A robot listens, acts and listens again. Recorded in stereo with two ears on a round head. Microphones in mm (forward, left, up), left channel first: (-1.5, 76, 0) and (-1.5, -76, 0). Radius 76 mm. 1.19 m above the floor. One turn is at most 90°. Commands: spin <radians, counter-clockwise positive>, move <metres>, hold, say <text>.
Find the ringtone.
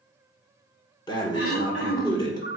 spin 0.96
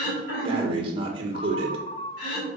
spin 0.70
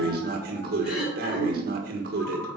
hold
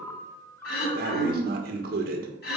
spin 0.26
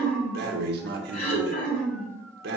hold
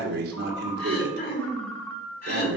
say Found it: a ringtone, straight ahead.